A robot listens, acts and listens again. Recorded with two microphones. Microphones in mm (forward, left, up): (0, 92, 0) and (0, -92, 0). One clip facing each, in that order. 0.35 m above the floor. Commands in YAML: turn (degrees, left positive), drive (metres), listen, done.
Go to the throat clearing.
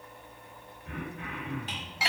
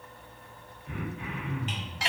turn: 55
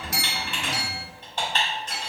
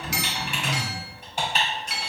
listen: true
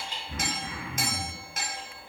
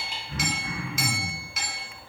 turn: 20
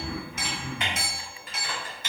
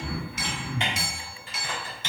drive: 1.0
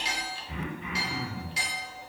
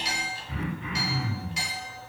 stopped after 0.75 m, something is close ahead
turn: 10
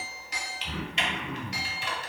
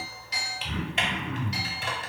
done: "Arrived at the throat clearing, straight ahead."